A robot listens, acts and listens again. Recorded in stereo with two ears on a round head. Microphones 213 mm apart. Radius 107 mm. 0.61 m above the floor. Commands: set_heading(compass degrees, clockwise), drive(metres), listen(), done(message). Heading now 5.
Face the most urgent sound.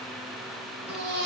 set_heading(50)
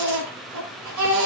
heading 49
set_heading(139)
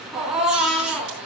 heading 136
done("Found it: a baby crying, straight ahead, over 4 m away.")